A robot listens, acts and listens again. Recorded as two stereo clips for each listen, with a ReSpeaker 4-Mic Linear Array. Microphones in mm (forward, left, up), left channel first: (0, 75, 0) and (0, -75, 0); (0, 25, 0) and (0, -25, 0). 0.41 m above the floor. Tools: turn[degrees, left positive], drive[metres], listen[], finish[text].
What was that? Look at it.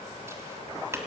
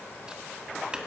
Thought: The tapping: about 20° right or 160° right.
Action: turn[-20]
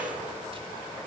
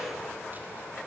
Action: listen[]
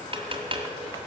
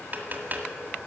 Thought: So it is at 140° right.
Action: turn[-140]
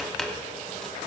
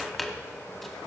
Action: finish[Found it: tapping, straight ahead, 1 to 2 m away.]